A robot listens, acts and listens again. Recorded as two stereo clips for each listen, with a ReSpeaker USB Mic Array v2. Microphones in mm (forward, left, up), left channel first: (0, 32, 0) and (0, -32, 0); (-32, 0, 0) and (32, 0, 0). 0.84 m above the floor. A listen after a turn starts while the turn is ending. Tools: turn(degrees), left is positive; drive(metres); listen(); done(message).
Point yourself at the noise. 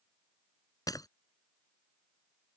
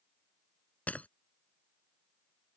turn(degrees=115)
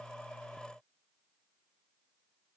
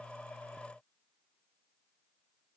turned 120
done("Facing where the breaking glass came from. I can't hear it now.")